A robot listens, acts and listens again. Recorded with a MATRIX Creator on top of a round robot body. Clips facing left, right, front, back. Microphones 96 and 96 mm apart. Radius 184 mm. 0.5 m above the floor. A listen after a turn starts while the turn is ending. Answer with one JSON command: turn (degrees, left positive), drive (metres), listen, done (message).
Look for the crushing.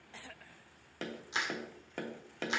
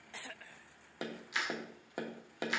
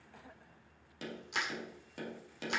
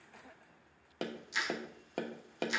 {"turn": 30}
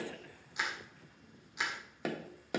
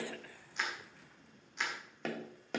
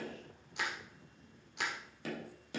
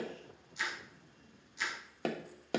{"turn": 10}
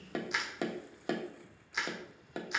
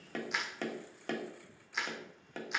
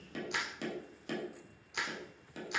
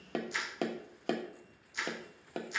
{"done": "Facing the crushing, 2 to 4 m away."}